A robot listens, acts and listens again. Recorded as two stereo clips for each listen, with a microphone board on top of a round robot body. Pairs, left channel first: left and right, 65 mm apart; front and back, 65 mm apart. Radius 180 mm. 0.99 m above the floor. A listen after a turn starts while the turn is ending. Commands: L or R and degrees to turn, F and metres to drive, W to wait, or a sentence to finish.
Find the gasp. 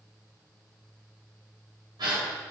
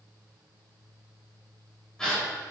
R80
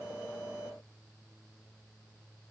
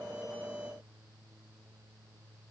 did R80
Facing where the gasp came from. I can't hear it now.